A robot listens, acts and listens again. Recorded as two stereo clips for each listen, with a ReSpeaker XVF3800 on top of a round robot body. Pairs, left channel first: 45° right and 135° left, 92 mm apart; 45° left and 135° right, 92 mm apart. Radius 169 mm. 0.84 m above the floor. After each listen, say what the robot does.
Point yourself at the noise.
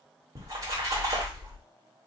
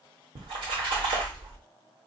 Turn 165° right.
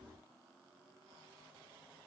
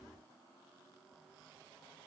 Facing where the splash came from. I can't hear it now.